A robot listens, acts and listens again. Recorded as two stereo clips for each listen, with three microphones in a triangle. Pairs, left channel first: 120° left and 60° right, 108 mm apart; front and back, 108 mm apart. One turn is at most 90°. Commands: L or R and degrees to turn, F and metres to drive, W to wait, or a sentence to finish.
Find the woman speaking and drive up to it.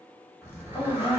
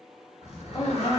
L60
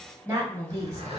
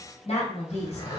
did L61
F1.0
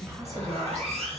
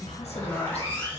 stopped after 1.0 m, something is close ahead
Arrived at the woman speaking, straight ahead.